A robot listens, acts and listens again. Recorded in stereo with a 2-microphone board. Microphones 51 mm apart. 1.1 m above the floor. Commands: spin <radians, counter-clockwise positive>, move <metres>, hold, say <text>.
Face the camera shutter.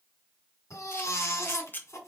spin 0.70
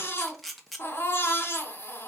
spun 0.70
say Facing the camera shutter.